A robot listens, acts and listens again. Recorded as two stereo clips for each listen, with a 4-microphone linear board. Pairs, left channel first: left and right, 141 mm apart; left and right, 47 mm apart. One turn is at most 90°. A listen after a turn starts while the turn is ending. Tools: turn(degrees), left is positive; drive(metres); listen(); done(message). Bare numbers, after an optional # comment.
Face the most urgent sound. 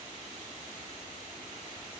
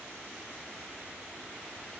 listen()
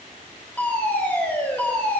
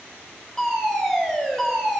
turn(30)
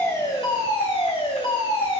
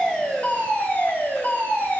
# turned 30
# So it is at 140° left.
turn(90)
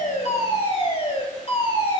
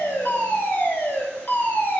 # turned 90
# The fire alarm is now 45° left.
turn(45)
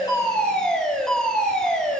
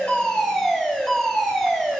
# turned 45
done("Facing the fire alarm.")